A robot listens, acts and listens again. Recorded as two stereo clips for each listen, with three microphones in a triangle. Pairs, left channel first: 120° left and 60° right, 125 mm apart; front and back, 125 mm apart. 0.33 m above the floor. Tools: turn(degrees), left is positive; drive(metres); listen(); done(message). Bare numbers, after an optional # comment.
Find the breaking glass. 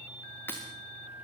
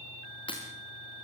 # The breaking glass: 45° left.
turn(45)
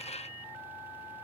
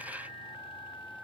done("I heard breaking glass from this way, but can't make it out now.")